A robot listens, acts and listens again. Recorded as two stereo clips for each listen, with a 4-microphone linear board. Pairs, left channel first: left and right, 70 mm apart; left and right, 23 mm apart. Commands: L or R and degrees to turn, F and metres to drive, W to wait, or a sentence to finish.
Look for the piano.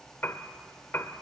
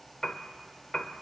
L30
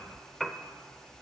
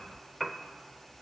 Found it: a piano, straight ahead, under 1 m away.